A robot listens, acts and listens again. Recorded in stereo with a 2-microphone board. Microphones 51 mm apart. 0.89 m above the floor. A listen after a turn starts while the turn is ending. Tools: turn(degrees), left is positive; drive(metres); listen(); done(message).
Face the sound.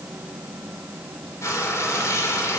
turn(degrees=75)
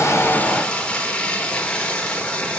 turn(degrees=20)
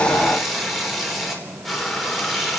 done("Facing the frying, 2 to 4 m away.")